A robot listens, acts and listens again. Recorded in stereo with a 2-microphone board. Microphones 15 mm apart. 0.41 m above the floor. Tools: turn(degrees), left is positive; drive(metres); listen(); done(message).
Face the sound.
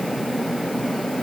listen()
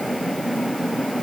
listen()
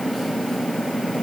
done("I can't make out anything.")